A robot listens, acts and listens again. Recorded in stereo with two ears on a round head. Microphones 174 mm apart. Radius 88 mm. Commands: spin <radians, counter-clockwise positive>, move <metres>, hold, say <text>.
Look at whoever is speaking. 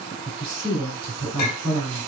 spin -0.44
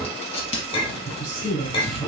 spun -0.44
say Found it: a woman speaking, straight ahead, 1 to 2 m away.